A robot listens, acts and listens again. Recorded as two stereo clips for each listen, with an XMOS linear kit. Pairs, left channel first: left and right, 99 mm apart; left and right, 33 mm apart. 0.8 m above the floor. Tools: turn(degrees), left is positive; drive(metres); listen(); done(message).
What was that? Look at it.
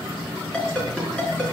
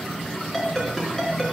turn(degrees=30)
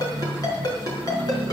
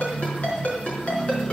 turn(degrees=140)
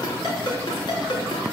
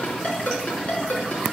turn(degrees=45)
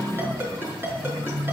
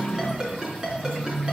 turn(degrees=-25)
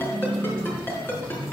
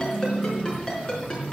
turn(degrees=20)
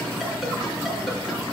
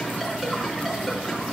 listen()
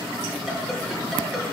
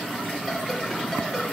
listen()
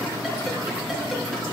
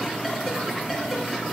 done("I heard a ringtone from this way, but can't make it out now.")